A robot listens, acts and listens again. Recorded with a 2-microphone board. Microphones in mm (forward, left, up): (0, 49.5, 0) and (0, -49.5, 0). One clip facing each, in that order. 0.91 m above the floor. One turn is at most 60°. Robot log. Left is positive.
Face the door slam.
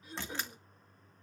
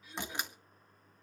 note: The door slam: about 15° right or 165° right.
cmd yaw -15
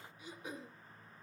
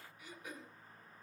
cmd idle
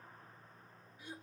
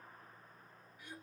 end: I heard a door slam, but can't make it out now. It was about straight ahead or 150° right.